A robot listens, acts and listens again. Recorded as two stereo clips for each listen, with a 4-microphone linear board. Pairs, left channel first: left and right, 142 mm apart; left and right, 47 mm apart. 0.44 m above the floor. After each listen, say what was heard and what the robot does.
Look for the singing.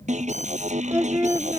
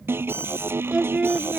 The singing: about 20° right or 160° right. Turn 20° right.
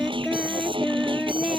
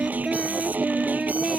Turn 30° right.
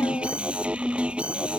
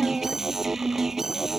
Keep listening.
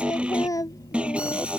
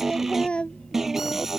So it is at 25° left. Turn 25° left.
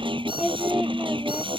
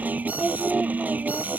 Found it: singing, straight ahead.